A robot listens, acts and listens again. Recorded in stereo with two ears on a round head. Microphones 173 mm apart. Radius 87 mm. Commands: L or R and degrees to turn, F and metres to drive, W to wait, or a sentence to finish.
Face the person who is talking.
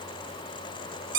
W
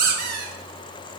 W
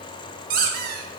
I can't make out anyone speaking, only a squeak.